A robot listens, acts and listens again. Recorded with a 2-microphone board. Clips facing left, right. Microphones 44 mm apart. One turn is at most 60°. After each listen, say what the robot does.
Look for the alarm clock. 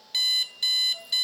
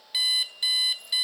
Turn 30° right.
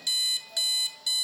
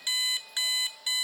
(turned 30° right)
Turn 60° right.
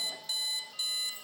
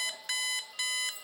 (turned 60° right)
Turn 60° right.
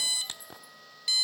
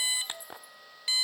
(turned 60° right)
Turn 30° right.
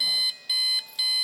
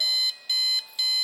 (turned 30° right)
Facing the alarm clock, under 1 m away.